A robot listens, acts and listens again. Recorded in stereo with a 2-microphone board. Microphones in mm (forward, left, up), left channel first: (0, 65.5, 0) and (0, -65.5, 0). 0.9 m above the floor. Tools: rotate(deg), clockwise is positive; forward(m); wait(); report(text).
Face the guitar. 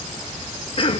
wait()
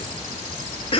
wait()
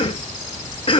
report("I can't make out a guitar to turn to.")